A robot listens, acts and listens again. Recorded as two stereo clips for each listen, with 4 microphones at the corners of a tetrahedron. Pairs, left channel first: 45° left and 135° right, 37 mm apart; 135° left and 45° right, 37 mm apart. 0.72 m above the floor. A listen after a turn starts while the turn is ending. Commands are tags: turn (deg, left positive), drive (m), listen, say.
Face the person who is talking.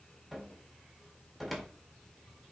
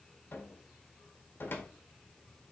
<listen/>
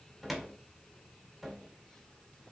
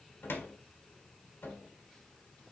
<listen/>
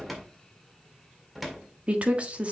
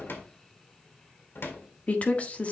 <turn deg="180"/>
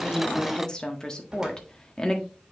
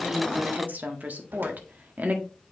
<turn deg="-20"/>
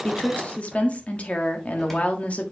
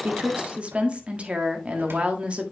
<say>Found it: a woman speaking, straight ahead, 1 to 2 m away.</say>